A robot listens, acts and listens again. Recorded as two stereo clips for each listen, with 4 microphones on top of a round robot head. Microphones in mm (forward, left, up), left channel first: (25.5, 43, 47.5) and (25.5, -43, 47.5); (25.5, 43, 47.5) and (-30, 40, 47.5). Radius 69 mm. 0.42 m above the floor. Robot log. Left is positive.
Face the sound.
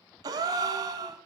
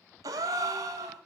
note: The gasp: 145° right.
cmd yaw -145
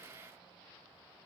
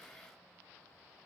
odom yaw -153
note: Nothing new. It was at 10° left.
cmd yaw +10
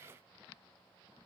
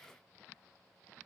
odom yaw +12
end: I heard a gasp from this way, but can't make it out now.